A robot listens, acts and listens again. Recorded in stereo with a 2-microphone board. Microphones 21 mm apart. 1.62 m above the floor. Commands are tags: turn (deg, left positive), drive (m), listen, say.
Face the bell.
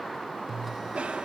<turn deg="-30"/>
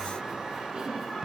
<turn deg="-135"/>
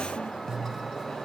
<turn deg="20"/>
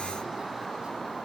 <listen/>
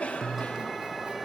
<say>Facing the bell.</say>